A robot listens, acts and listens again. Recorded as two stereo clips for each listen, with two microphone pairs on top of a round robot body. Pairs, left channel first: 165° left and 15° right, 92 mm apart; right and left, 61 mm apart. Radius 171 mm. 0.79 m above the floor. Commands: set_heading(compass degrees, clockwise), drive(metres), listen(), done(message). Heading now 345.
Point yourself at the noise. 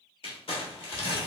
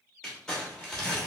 set_heading(150)
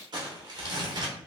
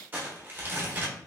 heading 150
set_heading(120)
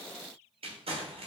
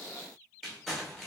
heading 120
done("Facing the crumpling, 1 to 2 m away.")